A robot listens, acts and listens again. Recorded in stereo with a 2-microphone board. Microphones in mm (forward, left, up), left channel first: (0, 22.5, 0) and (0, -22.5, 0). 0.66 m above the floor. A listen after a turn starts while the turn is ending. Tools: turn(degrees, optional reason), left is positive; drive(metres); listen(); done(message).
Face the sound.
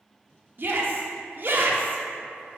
turn(degrees=-50, reason="The shout: about 50° right or 130° right.")
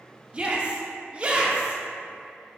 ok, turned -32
turn(degrees=-30, reason="So it is at 30° right.")
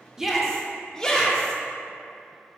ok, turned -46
turn(degrees=15, reason="The shout is now 15° left.")
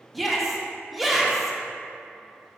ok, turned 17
done("Facing the shout, 1 to 2 m away.")